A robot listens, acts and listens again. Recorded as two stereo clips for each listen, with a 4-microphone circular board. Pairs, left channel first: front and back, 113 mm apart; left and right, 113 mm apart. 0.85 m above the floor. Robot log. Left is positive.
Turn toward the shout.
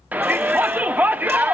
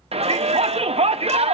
note: The shout: 105° right.
cmd yaw -105
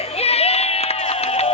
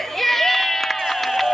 end: Found it: a shout, straight ahead.